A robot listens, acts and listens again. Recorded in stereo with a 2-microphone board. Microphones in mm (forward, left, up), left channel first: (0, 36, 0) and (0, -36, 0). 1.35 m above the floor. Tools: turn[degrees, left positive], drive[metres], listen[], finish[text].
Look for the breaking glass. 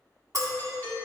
Thought: The breaking glass: about 50° right or 130° right.
Action: turn[-50]
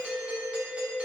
Action: listen[]
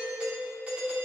Action: finish[I heard breaking glass, but can't make it out now. It was about straight ahead or 80° right.]